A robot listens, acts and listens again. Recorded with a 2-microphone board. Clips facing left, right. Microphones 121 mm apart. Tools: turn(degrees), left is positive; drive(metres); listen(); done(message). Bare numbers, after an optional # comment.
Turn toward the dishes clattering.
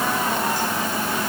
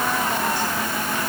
listen()
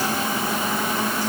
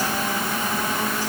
listen()
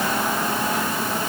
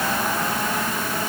done("I can't make out dishes clattering to turn to.")